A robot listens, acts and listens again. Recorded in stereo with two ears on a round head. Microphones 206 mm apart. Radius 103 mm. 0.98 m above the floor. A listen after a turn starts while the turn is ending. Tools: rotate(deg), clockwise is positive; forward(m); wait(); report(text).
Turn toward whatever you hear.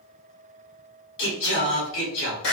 rotate(-55)
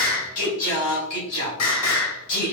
rotate(-70)
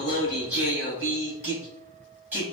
rotate(10)
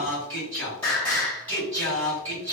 report("Facing the singing, 2 to 4 m away.")